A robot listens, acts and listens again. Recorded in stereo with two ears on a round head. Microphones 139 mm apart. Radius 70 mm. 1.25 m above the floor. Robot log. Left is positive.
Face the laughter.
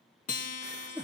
cmd yaw -30
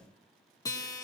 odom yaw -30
cmd idle
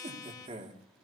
note: So it is at 130° right.
cmd yaw -130
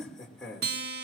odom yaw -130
end: Facing the laughter.